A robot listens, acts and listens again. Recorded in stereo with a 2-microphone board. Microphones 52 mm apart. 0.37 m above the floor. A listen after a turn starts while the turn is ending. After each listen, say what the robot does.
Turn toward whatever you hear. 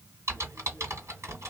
Turn 70° right.
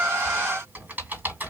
Turn 40° right.
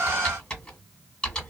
Turn 15° left.
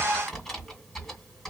Found it: typing on a keyboard, straight ahead, 1 to 2 m away.